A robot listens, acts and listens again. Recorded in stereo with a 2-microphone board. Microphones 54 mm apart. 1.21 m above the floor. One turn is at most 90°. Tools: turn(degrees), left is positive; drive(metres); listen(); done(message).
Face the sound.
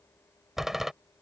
turn(degrees=-30)
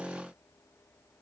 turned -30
listen()
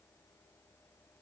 done("I heard a door slam, but can't make it out now. It was about 25° left or 145° right.")